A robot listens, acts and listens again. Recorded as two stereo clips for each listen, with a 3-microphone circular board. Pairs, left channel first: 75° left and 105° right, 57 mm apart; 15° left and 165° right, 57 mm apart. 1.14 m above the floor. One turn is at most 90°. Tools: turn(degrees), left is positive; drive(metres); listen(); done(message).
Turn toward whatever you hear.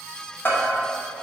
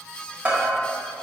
turn(degrees=90)
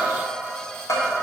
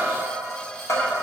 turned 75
turn(degrees=55)
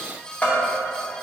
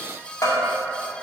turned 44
turn(degrees=10)
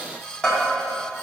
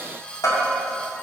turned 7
done("Facing the bell, 1 to 2 m away.")